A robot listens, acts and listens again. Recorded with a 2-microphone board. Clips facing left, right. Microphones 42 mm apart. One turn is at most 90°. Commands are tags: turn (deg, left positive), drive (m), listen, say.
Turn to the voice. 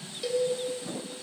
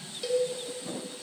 <listen/>
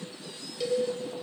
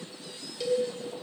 <listen/>
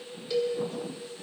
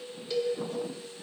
<say>I can't make out anyone speaking, only a cowbell.</say>